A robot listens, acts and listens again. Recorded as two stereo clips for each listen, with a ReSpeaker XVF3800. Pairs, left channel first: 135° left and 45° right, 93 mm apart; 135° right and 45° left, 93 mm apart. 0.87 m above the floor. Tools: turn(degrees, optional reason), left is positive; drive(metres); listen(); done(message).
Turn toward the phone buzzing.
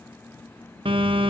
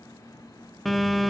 turn(degrees=-45, reason="The phone buzzing: 45° right.")
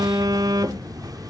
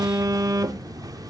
done("Facing the phone buzzing.")